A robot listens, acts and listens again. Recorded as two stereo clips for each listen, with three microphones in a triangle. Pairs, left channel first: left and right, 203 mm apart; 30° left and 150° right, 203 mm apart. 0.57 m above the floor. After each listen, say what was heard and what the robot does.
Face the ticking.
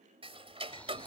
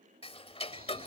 The ticking: 30° right. Turn 30° right.
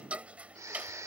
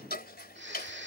Found it: ticking, straight ahead.